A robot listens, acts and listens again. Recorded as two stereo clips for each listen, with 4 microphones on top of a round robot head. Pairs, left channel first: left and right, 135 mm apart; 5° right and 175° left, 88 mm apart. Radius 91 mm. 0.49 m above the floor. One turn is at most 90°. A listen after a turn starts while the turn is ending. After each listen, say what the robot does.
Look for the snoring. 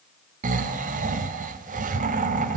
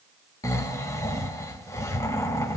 Turn 65° right.
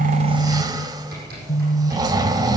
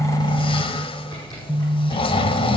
Turn 25° right.
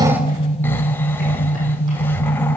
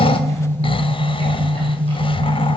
Turn 15° left.
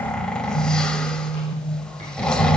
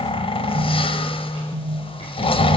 Facing the snoring, under 1 m away.